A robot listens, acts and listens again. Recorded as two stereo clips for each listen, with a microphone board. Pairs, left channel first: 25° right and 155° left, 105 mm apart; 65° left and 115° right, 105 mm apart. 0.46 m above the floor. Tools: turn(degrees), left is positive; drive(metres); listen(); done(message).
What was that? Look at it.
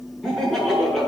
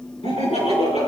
turn(degrees=65)
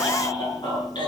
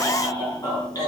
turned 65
turn(degrees=15)
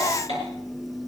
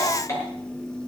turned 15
done("Found it: laughter, straight ahead, over 4 m away.")